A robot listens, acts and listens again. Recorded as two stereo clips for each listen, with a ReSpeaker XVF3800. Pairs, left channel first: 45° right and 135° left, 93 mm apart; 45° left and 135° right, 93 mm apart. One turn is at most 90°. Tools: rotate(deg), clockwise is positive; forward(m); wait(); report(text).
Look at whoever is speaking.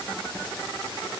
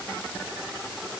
wait()
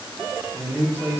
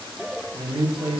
rotate(90)
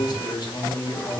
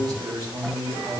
rotate(90)
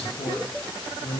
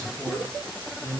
rotate(35)
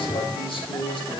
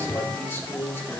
rotate(25)
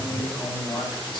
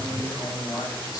report("Found it: a man speaking, straight ahead.")